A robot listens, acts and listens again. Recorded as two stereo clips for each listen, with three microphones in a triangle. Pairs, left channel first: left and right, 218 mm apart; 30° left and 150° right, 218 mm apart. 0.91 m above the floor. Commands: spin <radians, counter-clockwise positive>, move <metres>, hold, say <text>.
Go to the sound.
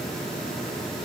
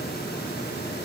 hold
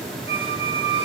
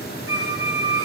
spin 0.44
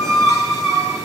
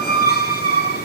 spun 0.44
spin -0.26
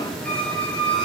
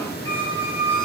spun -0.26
move 1.0
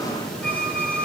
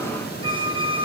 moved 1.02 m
move 1.0
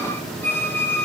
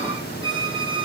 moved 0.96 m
spin 0.17
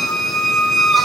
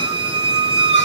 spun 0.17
move 1.0
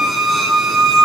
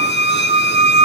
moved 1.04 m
move 1.0
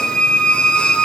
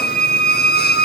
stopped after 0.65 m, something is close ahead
say I am next to the squeak.